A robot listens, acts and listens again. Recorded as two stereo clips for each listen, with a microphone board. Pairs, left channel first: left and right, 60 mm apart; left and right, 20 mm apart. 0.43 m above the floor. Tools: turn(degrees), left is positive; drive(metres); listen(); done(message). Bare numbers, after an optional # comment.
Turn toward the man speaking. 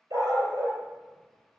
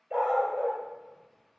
listen()
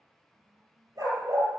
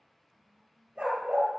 listen()
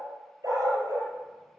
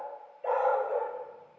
done("I can't make out a man speaking to turn to.")